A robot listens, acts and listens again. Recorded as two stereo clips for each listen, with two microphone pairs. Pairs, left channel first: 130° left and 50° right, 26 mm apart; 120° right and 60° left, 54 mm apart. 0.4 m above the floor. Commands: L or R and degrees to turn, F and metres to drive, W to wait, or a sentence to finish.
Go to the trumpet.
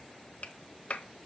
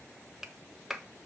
W
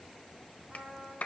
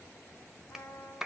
R105
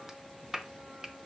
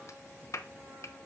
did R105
W
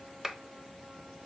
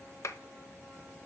W
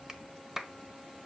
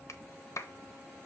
I heard a trumpet from this way, but can't make it out now. I did not reach it.